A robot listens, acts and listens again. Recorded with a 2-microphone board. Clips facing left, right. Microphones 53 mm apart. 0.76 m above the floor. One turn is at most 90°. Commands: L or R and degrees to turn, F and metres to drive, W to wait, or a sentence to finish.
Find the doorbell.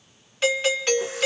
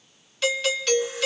L25
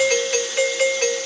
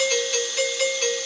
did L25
L90
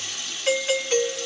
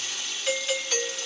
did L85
L40
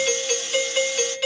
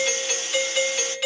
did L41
Facing the doorbell.